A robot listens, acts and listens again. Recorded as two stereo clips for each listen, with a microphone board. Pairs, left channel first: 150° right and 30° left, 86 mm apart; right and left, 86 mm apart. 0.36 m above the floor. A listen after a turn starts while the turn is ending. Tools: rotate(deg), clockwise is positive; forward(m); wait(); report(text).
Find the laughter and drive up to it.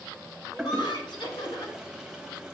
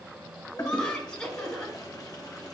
rotate(165)
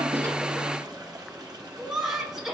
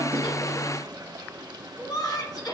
rotate(55)
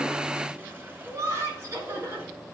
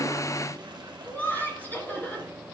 rotate(25)
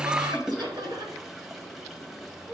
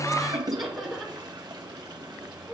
forward(1.0)
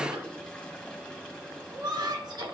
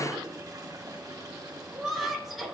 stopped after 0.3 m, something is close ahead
report("Blocked. The laughter is further on, straight ahead.")